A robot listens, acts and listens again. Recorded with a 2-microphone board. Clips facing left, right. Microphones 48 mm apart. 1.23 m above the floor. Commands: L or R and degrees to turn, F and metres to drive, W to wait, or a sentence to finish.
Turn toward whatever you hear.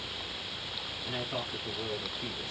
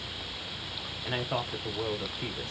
R55
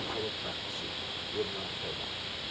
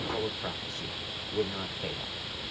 R60
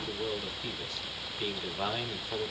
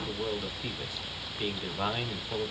R15
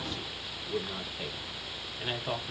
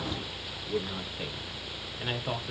Facing the man speaking.